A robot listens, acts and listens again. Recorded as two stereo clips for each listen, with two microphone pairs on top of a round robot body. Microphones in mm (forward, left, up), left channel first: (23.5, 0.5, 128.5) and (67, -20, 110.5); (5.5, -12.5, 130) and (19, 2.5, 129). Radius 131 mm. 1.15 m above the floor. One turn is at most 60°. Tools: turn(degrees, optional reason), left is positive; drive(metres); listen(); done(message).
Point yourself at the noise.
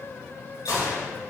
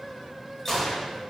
turn(degrees=60, reason="The gunshot: 155° left.")
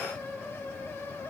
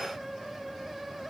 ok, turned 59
turn(degrees=60, reason="Nothing new. It was at 95° left.")
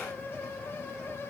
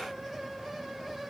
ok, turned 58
turn(degrees=40, reason="Nothing new. It was at 40° left.")
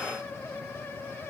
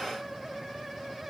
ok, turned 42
done("Facing where the gunshot came from. I can't hear it now.")